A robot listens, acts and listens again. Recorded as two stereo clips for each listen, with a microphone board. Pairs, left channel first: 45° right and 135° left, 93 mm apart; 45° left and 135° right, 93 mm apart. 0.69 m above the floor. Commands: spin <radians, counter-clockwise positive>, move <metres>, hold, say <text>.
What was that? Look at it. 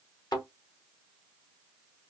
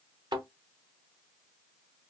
spin -1.57
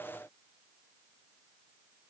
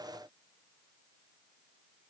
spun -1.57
say Facing where the thud came from. I can't hear it now.